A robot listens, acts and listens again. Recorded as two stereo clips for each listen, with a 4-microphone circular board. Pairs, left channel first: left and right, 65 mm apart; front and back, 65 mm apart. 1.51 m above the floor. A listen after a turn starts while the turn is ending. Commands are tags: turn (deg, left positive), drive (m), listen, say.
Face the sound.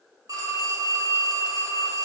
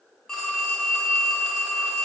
<turn deg="-80"/>
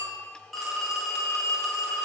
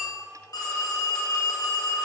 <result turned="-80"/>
<say>Facing the phone ringing.</say>